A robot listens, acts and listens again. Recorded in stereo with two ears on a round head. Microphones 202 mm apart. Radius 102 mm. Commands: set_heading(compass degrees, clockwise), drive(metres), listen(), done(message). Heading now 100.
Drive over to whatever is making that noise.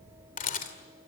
set_heading(60)
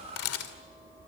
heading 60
set_heading(315)
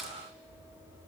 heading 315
drive(1.0)
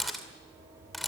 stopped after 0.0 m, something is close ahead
done("Blocked. The camera shutter is further on, straight ahead.")